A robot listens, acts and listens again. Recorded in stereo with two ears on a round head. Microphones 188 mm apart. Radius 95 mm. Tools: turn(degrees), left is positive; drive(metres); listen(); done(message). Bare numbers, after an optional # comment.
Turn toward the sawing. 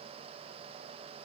listen()
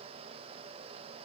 listen()
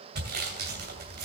# The sawing: about 50° right or 130° right.
turn(-50)
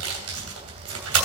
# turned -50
# So it is at 75° right.
turn(-75)
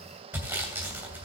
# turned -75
# The sawing is now 10° right.
turn(-10)
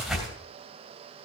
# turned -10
done("Found it: sawing, straight ahead, 2 to 4 m away.")